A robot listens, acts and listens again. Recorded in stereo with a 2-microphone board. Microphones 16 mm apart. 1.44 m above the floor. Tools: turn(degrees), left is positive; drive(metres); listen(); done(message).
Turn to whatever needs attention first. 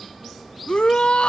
turn(degrees=90)
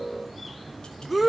turn(degrees=-10)
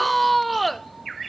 done("Found it: a shout, straight ahead.")